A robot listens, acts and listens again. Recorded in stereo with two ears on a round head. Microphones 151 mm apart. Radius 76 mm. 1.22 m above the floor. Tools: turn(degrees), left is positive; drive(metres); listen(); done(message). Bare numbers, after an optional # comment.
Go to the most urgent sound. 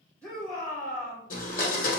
turn(30)
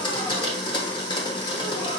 listen()
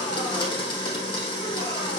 listen()
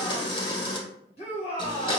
# So it is at 140° left.
turn(140)
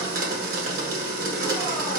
listen()
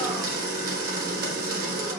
listen()
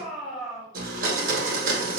drive(1.0)
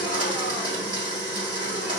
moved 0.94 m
listen()
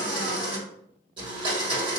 listen()
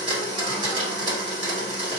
done("Facing where the shout came from. I can't hear it now. I did not reach it.")